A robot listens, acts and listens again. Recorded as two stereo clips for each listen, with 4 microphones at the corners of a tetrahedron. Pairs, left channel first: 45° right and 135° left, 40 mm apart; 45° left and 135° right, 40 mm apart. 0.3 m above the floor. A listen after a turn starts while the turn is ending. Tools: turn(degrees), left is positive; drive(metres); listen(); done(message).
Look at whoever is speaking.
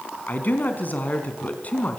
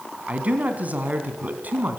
turn(degrees=-95)
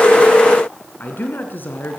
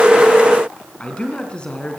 turn(degrees=-20)
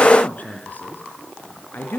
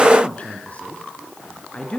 turn(degrees=-10)
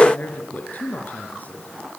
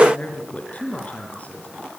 done("Found it: a man speaking, straight ahead, over 4 m away.")